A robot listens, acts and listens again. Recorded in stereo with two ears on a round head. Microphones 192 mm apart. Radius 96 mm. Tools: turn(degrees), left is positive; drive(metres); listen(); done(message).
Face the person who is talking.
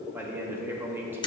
turn(degrees=-30)
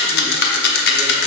listen()
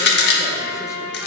listen()
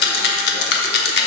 done("I heard a man speaking, but can't make it out now. It was about 20° left or 140° right.")